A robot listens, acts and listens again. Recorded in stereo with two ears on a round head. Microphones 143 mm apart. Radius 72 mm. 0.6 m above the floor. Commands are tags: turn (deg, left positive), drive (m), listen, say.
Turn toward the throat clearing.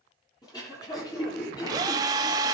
<turn deg="25"/>
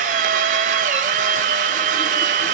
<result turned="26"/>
<listen/>
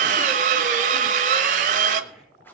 <listen/>
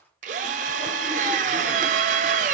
<say>I heard throat clearing, but can't make it out now. It was about straight ahead or 130° left.</say>